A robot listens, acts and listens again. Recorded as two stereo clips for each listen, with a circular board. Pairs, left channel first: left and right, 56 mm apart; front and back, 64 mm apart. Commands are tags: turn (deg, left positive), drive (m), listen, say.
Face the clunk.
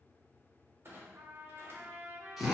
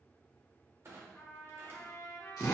<turn deg="-135"/>
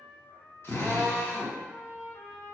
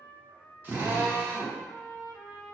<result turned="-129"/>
<say>Facing where the clunk came from. I can't hear it now.</say>